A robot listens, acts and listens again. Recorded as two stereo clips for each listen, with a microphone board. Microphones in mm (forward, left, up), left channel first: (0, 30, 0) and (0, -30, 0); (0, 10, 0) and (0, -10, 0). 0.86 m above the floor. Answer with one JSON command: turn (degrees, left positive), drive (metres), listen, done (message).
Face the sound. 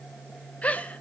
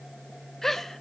{"turn": 20}
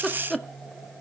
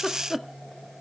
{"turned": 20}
{"done": "Facing the giggle."}